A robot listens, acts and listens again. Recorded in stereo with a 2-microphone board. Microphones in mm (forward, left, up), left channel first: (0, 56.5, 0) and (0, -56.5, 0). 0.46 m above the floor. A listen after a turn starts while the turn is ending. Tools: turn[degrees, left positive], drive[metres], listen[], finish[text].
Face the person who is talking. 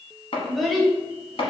Action: turn[30]
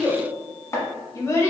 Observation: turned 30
Thought: So it is at 150° left.
Action: turn[150]
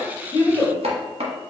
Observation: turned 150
Thought: The child speaking is now 20° left.
Action: turn[20]
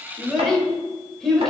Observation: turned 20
Action: finish[Facing the child speaking, 1 to 2 m away.]